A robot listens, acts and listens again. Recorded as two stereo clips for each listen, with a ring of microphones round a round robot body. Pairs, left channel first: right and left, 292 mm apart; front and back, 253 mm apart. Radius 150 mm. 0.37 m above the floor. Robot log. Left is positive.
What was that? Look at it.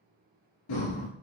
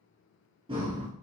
note: The breathing: 105° right.
cmd yaw -105
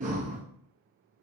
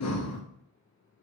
note: The breathing is now 25° left.
cmd yaw +25
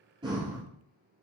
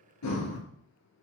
note: The breathing is now 15° left.
cmd yaw +15
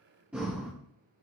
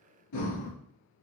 end: Facing the breathing.